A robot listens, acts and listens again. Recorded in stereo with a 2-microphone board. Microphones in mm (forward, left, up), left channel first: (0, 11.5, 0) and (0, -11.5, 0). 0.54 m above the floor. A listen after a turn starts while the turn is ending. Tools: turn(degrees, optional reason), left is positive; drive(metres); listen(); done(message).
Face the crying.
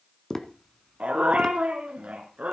listen()
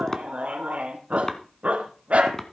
listen()
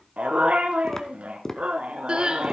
turn(degrees=-45, reason="The crying: about 45° right or 135° right.")
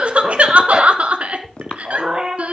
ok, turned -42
turn(degrees=-90, reason="So it is at 90° right.")
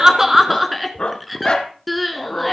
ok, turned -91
done("Facing the crying, 1 to 2 m away.")